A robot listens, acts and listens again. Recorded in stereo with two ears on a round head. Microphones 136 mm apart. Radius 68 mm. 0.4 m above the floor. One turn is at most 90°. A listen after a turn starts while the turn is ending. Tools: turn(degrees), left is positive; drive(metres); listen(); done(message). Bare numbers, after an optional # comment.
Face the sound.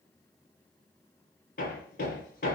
# The hammering: about 60° left or 120° left.
turn(60)
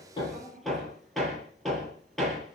done("Facing the hammering, over 4 m away.")